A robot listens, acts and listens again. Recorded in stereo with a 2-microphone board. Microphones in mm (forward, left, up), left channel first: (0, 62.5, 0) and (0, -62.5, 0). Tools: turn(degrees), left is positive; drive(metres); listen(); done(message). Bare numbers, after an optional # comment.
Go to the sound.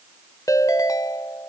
# The ringtone: about 25° left or 155° left.
turn(25)
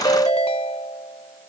# So it is at 125° left.
turn(125)
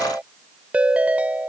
# The ringtone is now 10° right.
turn(-10)
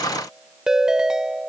drive(1.0)
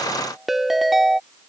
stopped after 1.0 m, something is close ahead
done("I am next to the ringtone.")